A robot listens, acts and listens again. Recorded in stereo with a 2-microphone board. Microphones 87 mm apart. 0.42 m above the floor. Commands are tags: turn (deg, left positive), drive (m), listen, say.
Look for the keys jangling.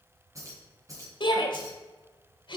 <turn deg="-40"/>
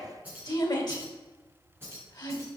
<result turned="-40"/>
<turn deg="-25"/>
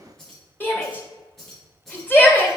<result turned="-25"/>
<say>Facing the keys jangling, 2 to 4 m away.</say>